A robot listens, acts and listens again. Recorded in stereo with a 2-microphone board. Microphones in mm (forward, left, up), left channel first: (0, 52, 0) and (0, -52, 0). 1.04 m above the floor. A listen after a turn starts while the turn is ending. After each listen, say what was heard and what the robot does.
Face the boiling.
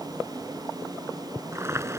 The boiling: about 25° right or 155° right. Turn 25° right.
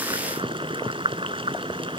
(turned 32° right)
So it is at 125° right. Turn 125° right.
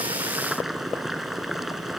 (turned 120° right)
Facing the boiling.